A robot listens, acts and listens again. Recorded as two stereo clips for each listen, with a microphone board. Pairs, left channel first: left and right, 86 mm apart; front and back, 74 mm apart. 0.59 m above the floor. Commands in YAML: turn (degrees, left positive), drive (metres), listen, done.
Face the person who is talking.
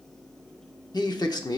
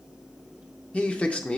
turn: 70
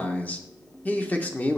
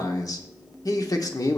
turn: 20
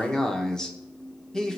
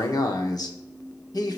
turn: 10
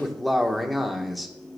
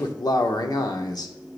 done: "Found it: a man speaking, straight ahead."